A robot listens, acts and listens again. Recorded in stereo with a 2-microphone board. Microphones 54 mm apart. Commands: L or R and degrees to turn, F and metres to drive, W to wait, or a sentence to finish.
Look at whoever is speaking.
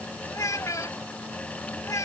L90
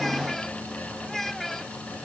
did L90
Facing the child speaking.